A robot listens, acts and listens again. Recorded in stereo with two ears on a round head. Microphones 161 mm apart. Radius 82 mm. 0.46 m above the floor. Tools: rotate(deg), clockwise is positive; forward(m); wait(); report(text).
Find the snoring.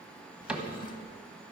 wait()
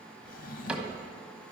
wait()
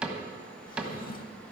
report("I can't make out snoring to turn to.")